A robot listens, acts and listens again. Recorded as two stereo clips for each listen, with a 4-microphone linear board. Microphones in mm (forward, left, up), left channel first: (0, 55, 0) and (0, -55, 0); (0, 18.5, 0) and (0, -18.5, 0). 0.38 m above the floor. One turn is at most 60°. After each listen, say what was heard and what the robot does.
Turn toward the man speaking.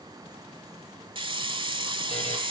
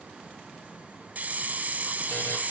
Keep listening.
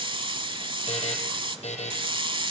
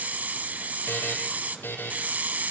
Keep listening.
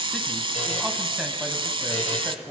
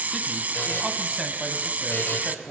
The man speaking: about 20° right or 160° right. Turn 20° right.
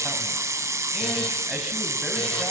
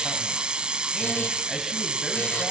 Keep listening.
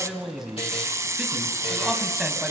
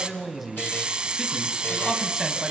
Turn 30° right.
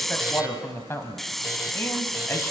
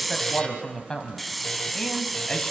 So it is at 25° left. Turn 25° left.
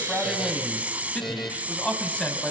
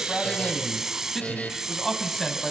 The man speaking is now 10° left. Turn 10° left.
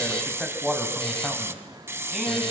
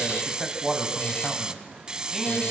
Found it: a man speaking, straight ahead, 2 to 4 m away.